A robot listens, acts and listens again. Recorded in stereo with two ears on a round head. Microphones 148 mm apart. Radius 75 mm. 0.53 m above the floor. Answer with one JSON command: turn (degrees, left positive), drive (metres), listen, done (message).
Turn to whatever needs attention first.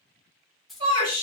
{"turn": -40}
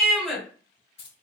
{"done": "Found it: a shout, straight ahead."}